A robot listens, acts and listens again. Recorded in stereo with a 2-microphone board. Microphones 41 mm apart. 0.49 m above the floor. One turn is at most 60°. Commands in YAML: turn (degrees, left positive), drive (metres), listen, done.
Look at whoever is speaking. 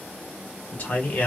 turn: 40
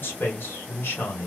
turn: 60
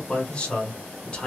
turn: 30
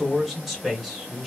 done: "Facing the man speaking, 1 to 2 m away."